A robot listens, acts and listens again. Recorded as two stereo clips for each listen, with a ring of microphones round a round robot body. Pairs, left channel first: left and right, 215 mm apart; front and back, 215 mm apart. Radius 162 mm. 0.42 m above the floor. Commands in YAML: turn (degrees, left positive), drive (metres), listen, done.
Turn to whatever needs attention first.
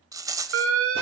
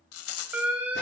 turn: -95
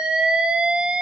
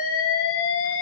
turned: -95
done: "Facing the alarm."